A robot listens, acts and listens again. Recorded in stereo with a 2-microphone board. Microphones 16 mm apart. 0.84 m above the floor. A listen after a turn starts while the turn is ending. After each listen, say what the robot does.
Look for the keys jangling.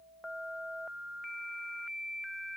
Keep listening.
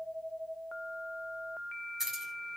Turn 15° right.
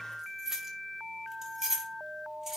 Turn 25° right.
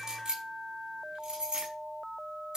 Turn 130° right.
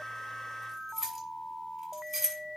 Turn 10° right.
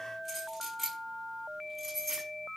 Found it: keys jangling, straight ahead, over 4 m away.